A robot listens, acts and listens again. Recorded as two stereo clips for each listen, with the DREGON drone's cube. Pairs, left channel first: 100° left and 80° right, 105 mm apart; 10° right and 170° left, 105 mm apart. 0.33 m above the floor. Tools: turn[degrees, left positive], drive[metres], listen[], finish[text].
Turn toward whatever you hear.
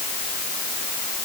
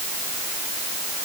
Action: listen[]
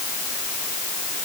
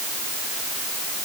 Action: listen[]
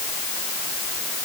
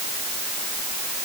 Action: finish[I can't make out anything.]